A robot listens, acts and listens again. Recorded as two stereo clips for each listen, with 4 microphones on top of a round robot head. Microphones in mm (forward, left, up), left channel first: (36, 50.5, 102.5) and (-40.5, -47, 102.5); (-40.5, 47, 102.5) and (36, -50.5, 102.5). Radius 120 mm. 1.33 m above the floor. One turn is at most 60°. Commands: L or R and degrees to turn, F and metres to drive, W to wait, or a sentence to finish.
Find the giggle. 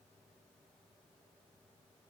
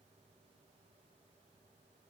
W
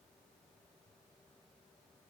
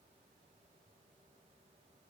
W
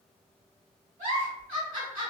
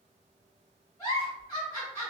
R60
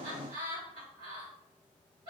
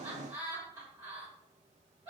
R60
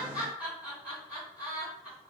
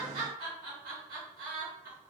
R50
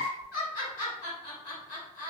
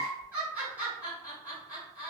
L25
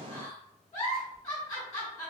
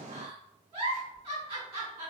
Found it: a giggle, straight ahead, 2 to 4 m away.